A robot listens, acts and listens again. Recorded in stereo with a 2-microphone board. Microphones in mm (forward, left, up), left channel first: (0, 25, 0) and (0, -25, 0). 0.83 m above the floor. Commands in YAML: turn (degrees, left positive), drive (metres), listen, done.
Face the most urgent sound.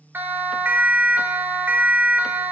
turn: -45
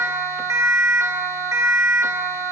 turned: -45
turn: -90
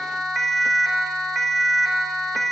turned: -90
done: "Facing the siren."